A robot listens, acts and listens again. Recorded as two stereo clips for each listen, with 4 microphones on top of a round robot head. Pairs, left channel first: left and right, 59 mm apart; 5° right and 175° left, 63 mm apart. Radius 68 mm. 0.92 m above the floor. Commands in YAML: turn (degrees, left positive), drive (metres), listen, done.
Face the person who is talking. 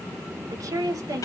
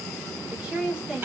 turn: -110
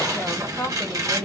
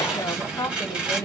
turn: 20
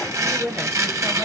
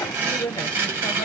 done: "Facing the woman speaking."